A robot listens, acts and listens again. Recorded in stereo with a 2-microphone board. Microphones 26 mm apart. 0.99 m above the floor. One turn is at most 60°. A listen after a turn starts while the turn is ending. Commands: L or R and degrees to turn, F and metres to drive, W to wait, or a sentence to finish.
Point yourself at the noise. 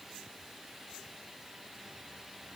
W
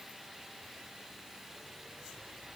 W
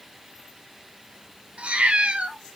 R50
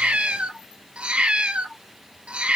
R50
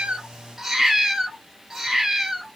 R15
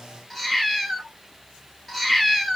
Facing the cat meowing, 1 to 2 m away.